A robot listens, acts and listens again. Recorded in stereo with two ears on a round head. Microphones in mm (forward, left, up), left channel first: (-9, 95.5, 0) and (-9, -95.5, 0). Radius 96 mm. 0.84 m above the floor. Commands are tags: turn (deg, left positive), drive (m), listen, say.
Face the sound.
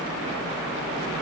<listen/>
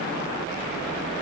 <listen/>
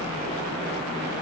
<say>I can't make out anything.</say>